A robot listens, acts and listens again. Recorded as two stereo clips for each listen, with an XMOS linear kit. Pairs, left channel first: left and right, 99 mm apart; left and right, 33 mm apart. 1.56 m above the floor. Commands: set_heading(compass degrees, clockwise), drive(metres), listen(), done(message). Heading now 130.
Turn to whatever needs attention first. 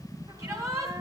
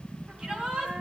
set_heading(165)
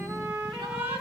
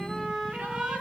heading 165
set_heading(275)
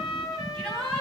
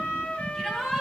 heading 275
set_heading(265)
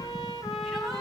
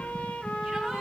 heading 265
listen()
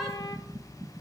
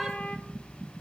listen()
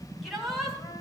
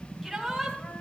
done("Facing the shout.")